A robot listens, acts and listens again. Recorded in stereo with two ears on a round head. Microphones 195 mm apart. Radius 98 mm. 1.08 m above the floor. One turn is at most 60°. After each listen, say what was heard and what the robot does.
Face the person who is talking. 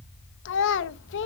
The child speaking: about 55° left or 125° left. Turn 55° left.
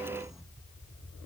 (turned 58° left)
Keep listening.
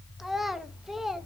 Facing the child speaking, under 1 m away.